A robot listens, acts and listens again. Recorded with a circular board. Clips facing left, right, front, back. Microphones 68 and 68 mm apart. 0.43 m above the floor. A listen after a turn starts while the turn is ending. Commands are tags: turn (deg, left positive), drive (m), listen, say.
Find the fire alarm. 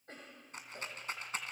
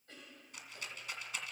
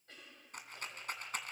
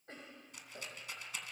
<listen/>
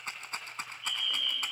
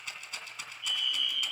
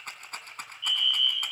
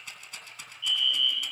<turn deg="-90"/>
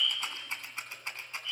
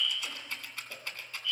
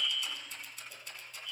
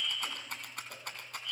<turn deg="30"/>
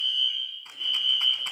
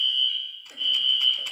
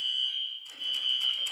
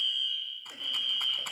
<turn deg="20"/>
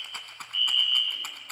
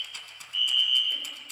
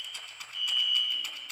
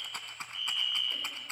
<say>Facing the fire alarm, over 4 m away.</say>